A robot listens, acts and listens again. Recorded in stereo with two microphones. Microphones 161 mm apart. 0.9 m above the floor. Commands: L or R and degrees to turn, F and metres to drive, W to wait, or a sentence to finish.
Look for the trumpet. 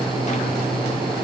W
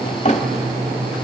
W
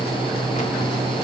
I can't make out a trumpet to turn to.